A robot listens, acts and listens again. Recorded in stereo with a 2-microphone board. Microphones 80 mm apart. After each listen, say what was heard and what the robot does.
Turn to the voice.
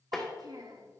The child speaking: about 55° right or 125° right. Turn 55° right.
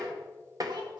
Keep listening.
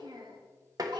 So it is at 70° right. Turn 70° right.
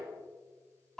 Facing the child speaking, 2 to 4 m away.